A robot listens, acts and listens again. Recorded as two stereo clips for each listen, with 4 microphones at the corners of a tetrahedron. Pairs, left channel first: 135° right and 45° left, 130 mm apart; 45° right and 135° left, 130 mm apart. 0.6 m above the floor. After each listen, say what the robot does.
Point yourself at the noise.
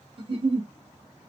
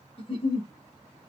Found it: a giggle, straight ahead, 1 to 2 m away.